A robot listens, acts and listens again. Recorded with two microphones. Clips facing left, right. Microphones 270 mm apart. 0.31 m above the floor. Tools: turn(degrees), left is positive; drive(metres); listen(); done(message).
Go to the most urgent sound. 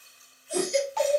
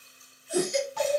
turn(degrees=35)
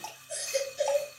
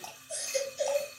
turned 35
turn(degrees=110)
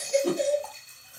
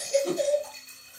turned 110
turn(degrees=20)
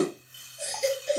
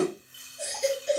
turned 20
drive(metres=1.0)
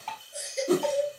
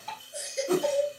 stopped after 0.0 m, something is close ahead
done("Blocked. The baby crying is further on, straight ahead.")